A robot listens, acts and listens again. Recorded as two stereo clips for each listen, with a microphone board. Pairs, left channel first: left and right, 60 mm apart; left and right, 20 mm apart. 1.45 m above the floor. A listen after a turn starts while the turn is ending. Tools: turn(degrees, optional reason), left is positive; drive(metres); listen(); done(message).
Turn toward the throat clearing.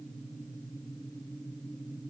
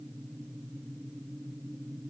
listen()
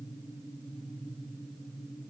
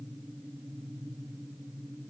listen()
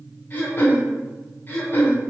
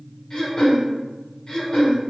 turn(degrees=35, reason="The throat clearing: about 35° left or 145° left.")
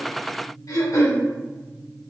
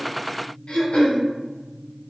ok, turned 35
turn(degrees=110, reason="So it is at 110° left.")
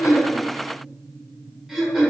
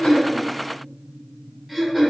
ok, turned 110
done("Found it: throat clearing, straight ahead, under 1 m away.")